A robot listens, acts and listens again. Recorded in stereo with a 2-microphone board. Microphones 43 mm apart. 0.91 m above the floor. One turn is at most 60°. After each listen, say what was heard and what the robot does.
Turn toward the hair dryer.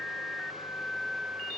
Keep listening.
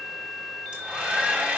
The hair dryer: about 25° right or 155° right. Turn 25° right.
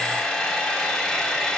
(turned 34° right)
So it is at 10° left. Turn 10° left.
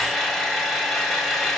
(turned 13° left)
Facing the hair dryer, 2 to 4 m away.